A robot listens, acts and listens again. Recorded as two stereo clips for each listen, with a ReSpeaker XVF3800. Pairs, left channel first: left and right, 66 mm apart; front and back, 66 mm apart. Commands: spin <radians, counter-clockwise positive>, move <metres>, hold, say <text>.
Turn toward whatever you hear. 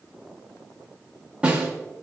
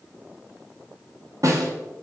spin -2.79
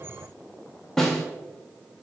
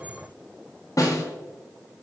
spin 0.17
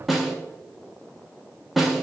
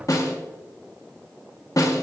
say Found it: a snare drum, straight ahead, 1 to 2 m away.